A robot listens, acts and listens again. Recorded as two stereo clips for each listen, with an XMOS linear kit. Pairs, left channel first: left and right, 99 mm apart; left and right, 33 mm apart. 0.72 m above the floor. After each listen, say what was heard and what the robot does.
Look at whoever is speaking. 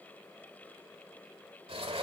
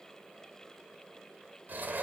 Keep listening.
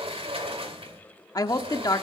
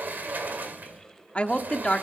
The woman speaking: about 40° left or 140° left. Turn 40° left.
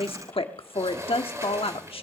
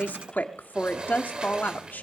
So it is at 95° left. Turn 95° left.
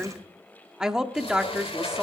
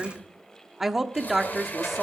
Found it: a woman speaking, straight ahead, 1 to 2 m away.